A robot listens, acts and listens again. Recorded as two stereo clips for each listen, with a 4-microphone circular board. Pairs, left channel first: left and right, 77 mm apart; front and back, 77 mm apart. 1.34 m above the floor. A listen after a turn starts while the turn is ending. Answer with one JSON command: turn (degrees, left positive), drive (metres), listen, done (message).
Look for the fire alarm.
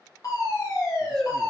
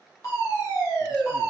{"turn": 45}
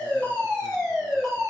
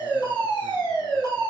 {"done": "Found it: a fire alarm, straight ahead, 2 to 4 m away."}